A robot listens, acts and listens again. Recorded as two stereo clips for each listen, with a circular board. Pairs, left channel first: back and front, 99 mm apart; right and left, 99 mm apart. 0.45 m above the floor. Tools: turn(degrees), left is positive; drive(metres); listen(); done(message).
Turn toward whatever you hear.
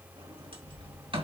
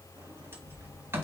turn(degrees=25)
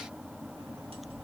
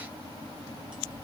listen()
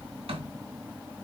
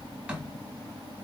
turn(degrees=10)
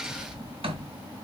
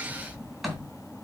done("Found it: a sliding door, straight ahead.")